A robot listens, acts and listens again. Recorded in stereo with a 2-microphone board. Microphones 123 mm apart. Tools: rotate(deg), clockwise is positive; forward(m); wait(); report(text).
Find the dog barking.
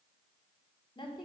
wait()
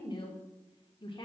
wait()
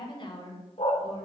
rotate(-60)
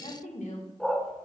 report("Found it: a dog barking, straight ahead.")